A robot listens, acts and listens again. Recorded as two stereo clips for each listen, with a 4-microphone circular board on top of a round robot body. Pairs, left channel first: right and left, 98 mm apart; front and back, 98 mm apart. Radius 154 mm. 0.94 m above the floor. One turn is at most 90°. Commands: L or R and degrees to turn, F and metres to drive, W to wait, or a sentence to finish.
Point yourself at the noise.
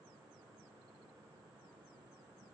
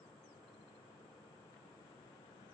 W
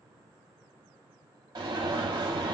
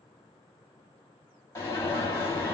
L60
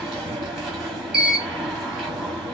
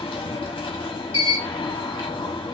Facing the alarm.